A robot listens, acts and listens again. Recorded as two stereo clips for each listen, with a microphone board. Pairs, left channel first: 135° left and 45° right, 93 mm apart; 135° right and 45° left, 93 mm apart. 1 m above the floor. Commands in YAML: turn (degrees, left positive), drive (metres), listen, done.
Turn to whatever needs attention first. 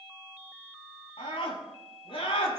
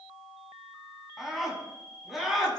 turn: 135
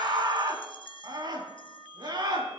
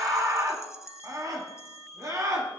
done: "Facing the scream."